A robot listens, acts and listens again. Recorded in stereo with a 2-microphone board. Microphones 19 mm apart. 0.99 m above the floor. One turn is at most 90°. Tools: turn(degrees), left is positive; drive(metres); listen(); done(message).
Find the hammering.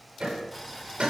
turn(degrees=-65)
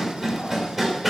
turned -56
turn(degrees=-10)
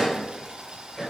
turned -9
done("Found it: hammering, straight ahead, 2 to 4 m away.")